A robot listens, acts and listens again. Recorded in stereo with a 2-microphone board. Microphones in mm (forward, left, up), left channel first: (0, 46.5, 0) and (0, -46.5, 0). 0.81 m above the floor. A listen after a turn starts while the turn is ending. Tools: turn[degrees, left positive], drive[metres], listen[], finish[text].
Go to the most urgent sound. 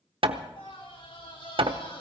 Thought: The scream: about 75° left or 105° left.
Action: turn[75]
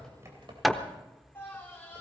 Thought: So it is at 25° left.
Action: turn[25]
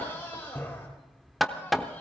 Thought: The scream is now 25° left.
Action: turn[25]
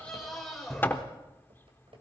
Action: drive[1.0]
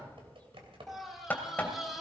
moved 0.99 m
Action: drive[1.0]
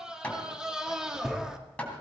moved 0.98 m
Thought: The scream is now 10° right.
Action: turn[-10]
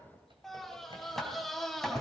Action: drive[1.0]
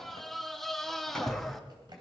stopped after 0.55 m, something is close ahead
Action: finish[Arrived at the scream, straight ahead.]